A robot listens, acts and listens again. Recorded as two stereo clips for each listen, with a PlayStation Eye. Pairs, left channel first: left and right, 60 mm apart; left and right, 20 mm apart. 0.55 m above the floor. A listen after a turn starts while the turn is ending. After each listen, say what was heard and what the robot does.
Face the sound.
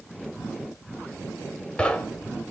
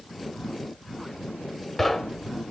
The knocking: about 15° left or 165° left. Turn 15° left.
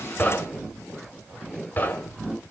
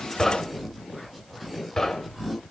So it is at 150° left. Turn 150° left.
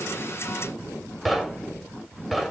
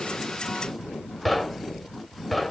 Found it: knocking, straight ahead.